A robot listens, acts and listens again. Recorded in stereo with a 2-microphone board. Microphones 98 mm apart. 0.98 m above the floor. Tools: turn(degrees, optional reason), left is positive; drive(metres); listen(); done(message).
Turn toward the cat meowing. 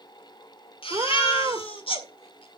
turn(degrees=-35, reason="The cat meowing: about 35° right or 145° right.")
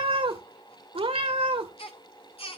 turn(degrees=-110, reason="So it is at 110° right.")
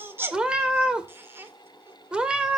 turn(degrees=-10, reason="The cat meowing is now 10° right.")
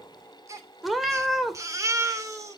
done("Found it: a cat meowing, straight ahead.")